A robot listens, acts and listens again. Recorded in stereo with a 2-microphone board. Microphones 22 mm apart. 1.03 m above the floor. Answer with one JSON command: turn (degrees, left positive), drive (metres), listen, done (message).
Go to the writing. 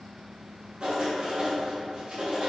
{"turn": -50}
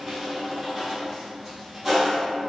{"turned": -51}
{"drive": 1.0}
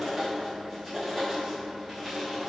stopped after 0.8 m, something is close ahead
{"turn": -10}
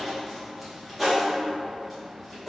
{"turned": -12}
{"done": "Arrived at the writing, straight ahead."}